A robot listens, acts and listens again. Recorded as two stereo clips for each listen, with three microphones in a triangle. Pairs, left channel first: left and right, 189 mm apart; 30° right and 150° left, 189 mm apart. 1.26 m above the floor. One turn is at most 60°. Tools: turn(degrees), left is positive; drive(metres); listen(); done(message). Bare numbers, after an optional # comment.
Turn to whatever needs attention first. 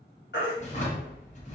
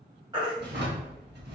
# The baby crying: 85° left.
turn(60)
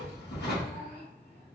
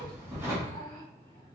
# Nothing new. It was at 25° left.
turn(25)
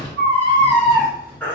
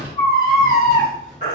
# The baby crying is now 10° left.
turn(10)
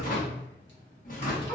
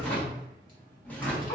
done("Found it: a baby crying, straight ahead.")